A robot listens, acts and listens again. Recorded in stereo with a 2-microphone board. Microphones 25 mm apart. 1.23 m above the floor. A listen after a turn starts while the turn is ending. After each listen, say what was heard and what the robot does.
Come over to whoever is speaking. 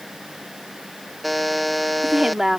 The woman speaking: about 20° right or 160° right. Turn 20° right.
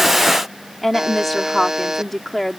Drive 1.0 m forward.
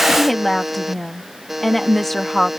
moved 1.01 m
Drive 1.0 m forward.
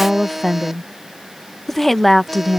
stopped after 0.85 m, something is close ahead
I am next to the woman speaking.